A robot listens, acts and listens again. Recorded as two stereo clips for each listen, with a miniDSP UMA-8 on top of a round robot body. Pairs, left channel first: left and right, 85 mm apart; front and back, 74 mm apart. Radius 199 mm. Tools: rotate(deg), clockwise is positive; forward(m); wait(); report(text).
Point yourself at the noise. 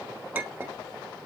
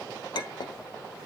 rotate(25)
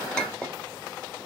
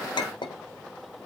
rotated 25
rotate(-10)
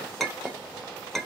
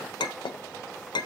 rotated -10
report("Found it: a clink, straight ahead, 1 to 2 m away.")